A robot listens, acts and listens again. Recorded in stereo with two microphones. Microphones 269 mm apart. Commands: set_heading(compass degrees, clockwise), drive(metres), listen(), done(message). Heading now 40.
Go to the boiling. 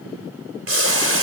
set_heading(95)
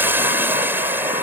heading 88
drive(1.0)
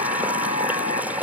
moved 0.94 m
drive(1.0)
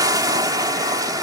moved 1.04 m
set_heading(103)
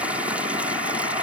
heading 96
listen()
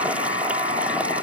listen()
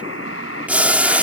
drive(1.0)
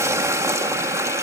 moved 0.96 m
set_heading(106)
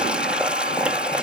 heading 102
drive(1.0)
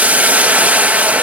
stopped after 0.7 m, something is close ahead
done("Arrived at the boiling, straight ahead.")